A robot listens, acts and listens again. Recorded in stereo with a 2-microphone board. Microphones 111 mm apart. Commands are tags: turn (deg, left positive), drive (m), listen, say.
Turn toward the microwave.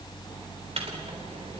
<turn deg="-60"/>
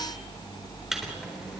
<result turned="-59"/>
<say>Found it: a microwave, straight ahead.</say>